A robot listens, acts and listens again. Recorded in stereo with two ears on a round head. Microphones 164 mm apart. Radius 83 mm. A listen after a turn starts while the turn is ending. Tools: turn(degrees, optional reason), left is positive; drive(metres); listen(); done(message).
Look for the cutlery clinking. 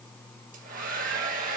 listen()
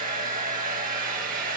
listen()
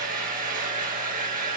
done("I can't make out cutlery clinking to turn to.")